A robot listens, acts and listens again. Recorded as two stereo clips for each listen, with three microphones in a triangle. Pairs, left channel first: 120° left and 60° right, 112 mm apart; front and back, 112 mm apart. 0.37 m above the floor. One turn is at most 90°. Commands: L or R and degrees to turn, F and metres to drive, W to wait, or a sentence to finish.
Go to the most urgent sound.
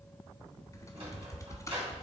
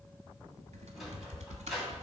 W
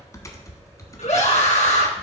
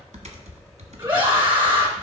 L90
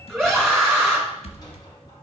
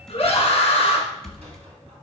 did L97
L35
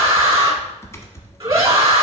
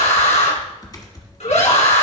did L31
F1.0
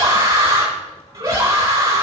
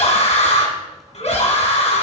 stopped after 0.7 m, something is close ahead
Something is in my way. I am facing the scream but have not reached it.